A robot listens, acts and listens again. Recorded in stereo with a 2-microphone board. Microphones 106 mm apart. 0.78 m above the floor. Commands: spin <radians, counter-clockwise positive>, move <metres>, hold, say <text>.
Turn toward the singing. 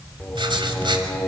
spin 0.52
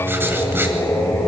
spin 2.79
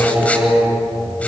spin -0.26
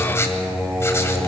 say Found it: singing, straight ahead, over 4 m away.